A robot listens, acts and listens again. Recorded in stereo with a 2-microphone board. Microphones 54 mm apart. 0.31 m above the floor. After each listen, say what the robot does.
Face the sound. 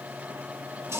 Turn 60° right.
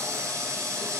Turn 60° right.
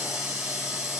Facing the running tap, over 4 m away.